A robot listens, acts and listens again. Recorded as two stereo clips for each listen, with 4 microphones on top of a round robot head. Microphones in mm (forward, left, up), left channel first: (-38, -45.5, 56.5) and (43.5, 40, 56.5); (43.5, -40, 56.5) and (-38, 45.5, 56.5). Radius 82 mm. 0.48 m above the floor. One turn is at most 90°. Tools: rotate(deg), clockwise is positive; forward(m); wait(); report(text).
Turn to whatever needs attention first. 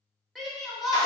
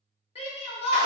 rotate(40)
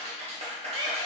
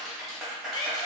wait()
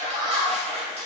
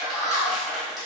report("Facing the shout, 1 to 2 m away.")